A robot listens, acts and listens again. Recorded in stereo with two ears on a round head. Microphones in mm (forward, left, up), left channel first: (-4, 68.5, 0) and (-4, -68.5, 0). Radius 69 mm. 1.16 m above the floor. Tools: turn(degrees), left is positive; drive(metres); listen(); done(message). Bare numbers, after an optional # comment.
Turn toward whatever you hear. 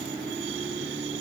listen()
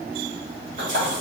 # The splash: about 50° right or 130° right.
turn(-50)
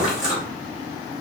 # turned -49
done("Facing the splash.")